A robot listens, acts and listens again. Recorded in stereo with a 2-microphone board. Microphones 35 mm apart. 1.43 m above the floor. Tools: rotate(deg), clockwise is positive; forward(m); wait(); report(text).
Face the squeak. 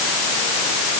wait()
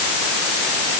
wait()
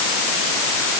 report("I can't make out a squeak.")